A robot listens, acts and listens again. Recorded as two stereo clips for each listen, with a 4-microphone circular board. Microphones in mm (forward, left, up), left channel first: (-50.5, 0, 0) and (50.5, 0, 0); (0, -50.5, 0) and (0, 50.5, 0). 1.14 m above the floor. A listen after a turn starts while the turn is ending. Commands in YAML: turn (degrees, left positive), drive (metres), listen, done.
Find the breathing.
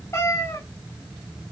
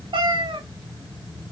listen: true
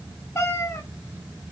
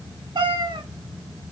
listen: true
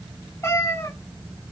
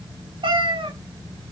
done: "I can't make out breathing to turn to."